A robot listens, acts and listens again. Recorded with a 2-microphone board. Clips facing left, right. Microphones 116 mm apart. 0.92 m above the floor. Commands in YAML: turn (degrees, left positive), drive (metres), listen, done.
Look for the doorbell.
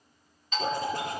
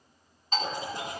turn: -40
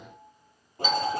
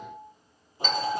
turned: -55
turn: 10
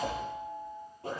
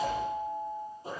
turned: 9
done: "Facing the doorbell."